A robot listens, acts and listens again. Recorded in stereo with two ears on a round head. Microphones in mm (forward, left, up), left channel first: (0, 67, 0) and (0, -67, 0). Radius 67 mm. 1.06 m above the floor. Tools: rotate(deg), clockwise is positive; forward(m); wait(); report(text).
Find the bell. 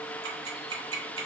wait()
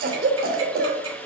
wait()
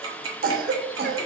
report("I can't make out a bell to turn to.")